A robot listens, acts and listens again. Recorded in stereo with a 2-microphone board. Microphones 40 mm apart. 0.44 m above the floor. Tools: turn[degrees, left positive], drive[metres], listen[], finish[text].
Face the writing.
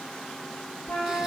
Thought: The writing: about 45° right or 135° right.
Action: turn[-45]
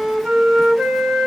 Action: listen[]
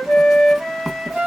Action: finish[Found it: writing, straight ahead, 1 to 2 m away.]